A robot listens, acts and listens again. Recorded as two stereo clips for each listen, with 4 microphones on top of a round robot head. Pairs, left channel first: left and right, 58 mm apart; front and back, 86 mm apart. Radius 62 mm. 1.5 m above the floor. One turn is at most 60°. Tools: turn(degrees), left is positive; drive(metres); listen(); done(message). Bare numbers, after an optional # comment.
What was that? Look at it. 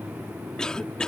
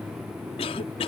# The cough: 10° left.
turn(10)
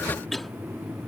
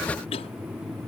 done("Found it: a cough, straight ahead.")